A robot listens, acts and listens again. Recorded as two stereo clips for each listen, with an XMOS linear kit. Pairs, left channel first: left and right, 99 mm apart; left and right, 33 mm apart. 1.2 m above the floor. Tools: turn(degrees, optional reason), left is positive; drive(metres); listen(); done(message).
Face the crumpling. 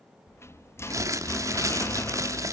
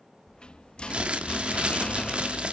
turn(degrees=-35, reason="The crumpling: about 35° right or 145° right.")
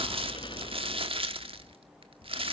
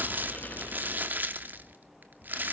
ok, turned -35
turn(degrees=-110, reason="So it is at 110° right.")
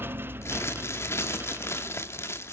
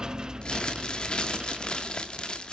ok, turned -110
turn(degrees=25, reason="The crumpling is now 25° left.")
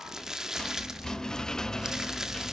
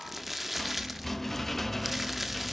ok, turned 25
done("Found it: crumpling, straight ahead.")